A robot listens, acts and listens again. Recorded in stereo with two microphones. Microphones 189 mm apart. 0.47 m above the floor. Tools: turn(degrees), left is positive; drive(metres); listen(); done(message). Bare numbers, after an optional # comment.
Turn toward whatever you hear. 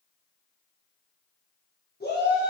# The shout: about 55° left or 125° left.
turn(55)
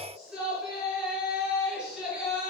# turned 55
done("Facing the shout.")